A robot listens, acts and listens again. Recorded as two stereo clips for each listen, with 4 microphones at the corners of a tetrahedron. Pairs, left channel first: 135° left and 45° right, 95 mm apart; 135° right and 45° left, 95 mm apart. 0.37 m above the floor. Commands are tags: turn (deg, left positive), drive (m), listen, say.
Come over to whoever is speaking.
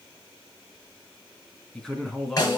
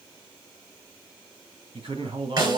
<turn deg="50"/>
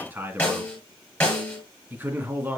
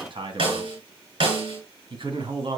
<turn deg="20"/>
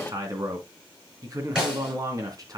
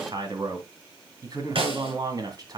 <drive m="1.0"/>
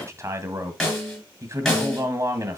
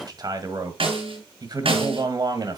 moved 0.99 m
<drive m="1.0"/>
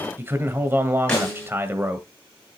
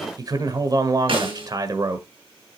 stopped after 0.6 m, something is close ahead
<turn deg="15"/>
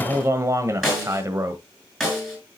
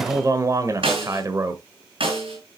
<say>Arrived at the man speaking, straight ahead.</say>